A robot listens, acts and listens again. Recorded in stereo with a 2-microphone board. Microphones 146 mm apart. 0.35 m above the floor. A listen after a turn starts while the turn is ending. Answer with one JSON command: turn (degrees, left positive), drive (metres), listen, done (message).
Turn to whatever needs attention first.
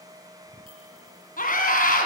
{"turn": 70}
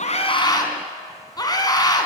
{"turn": 30}
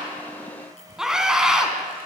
{"done": "Facing the scream."}